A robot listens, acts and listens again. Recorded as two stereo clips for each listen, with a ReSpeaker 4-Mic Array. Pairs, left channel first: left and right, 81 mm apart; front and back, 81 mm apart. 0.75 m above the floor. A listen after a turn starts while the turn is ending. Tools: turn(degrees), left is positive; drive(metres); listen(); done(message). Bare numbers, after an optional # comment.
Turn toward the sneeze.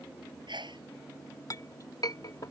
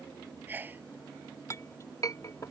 # The sneeze: 110° right.
turn(-110)
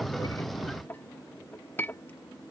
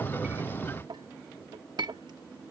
done("I heard a sneeze from this way, but can't make it out now.")